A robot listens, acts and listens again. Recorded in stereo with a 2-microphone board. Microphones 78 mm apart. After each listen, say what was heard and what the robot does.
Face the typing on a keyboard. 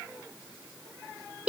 Keep listening.
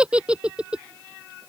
Keep listening.
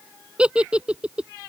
I can't make out typing on a keyboard, only a giggle.